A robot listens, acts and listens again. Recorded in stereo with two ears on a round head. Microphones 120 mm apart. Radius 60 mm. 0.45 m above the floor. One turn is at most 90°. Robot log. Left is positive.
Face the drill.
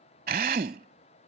note: The drill: about 70° right or 110° right.
cmd yaw -70
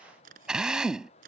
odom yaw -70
end: Found it: a drill, straight ahead.